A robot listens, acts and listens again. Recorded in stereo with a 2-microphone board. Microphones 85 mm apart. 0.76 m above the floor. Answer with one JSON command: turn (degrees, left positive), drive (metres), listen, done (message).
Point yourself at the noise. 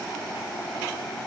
{"listen": true}
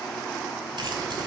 {"listen": true}
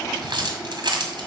{"turn": -75}
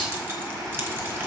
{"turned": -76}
{"turn": -25}
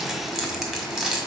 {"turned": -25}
{"done": "Facing the keys jangling, 1 to 2 m away."}